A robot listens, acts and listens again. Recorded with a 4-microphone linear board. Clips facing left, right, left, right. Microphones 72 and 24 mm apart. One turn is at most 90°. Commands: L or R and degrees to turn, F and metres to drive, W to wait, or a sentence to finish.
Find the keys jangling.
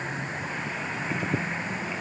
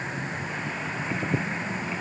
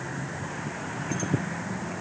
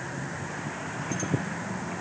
W
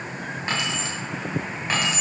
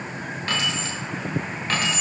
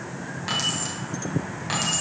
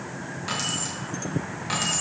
L30
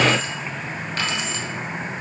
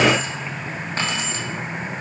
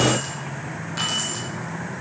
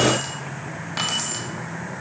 R30
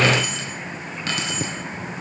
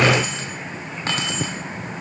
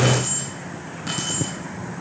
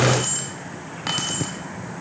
R35
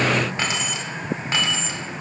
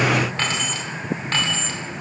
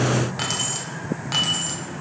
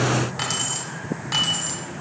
L10
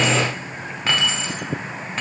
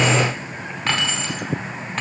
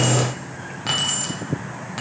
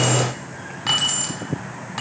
Facing the keys jangling, 2 to 4 m away.